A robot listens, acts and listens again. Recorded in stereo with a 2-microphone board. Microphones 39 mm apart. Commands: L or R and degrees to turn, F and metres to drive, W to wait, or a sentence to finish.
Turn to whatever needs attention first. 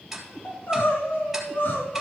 L60
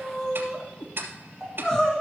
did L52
L15
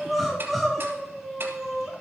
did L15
Found it: crying, straight ahead, 2 to 4 m away.